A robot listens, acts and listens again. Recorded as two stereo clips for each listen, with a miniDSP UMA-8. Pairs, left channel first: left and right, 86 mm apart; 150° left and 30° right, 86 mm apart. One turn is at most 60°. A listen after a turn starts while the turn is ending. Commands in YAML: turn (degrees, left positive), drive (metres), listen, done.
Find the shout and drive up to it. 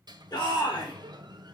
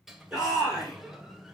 turn: 55
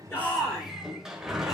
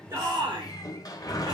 drive: 1.0
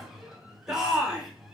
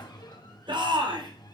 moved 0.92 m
drive: 1.0
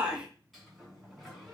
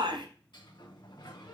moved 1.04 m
turn: -10
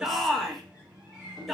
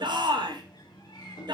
drive: 1.0
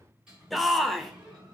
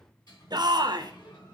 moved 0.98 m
drive: 1.0
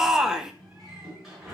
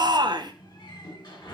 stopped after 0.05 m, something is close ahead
done: "Arrived at the shout, straight ahead."